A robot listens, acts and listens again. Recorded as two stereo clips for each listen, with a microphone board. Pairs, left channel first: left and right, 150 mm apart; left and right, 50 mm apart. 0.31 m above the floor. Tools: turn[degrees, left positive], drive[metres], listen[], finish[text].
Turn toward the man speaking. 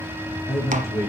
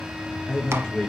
Thought: The man speaking: about 20° left or 160° left.
Action: turn[20]
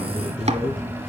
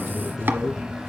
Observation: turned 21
Action: finish[Found it: a man speaking, straight ahead, 2 to 4 m away.]